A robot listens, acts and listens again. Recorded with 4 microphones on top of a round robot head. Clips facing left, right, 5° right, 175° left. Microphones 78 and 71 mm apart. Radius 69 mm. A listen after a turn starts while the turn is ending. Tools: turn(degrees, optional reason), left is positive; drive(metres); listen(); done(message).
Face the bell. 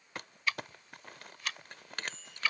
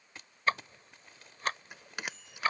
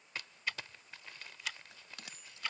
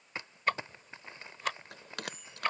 turn(degrees=-170, reason="The bell: 170° right.")
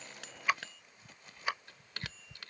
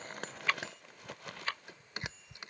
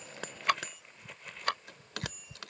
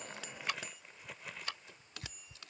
turn(degrees=-20, reason="The bell is now 20° right.")
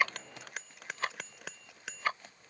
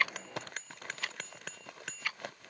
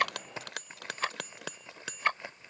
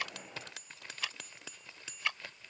done("Facing the bell.")